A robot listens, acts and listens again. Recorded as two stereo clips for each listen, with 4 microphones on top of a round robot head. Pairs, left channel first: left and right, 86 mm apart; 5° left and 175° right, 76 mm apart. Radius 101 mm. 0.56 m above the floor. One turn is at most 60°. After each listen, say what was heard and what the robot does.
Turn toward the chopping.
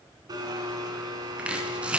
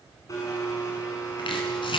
The chopping: 15° right. Turn 15° right.
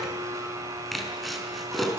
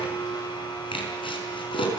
Found it: chopping, straight ahead.